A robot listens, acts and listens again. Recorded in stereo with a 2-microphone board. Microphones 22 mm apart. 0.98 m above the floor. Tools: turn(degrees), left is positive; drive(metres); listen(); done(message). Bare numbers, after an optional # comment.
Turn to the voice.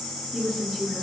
# The woman speaking: about 30° right or 150° right.
turn(-30)
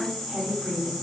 # So it is at 115° right.
turn(-115)
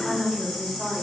done("Found it: a woman speaking, straight ahead.")